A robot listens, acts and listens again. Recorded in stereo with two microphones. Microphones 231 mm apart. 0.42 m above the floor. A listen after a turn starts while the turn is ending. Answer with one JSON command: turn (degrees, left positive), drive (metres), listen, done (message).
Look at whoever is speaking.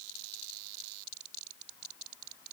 {"listen": true}
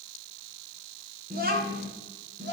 {"turn": -50}
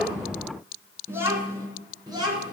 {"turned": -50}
{"turn": -20}
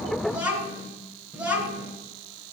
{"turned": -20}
{"done": "Facing the child speaking, 2 to 4 m away."}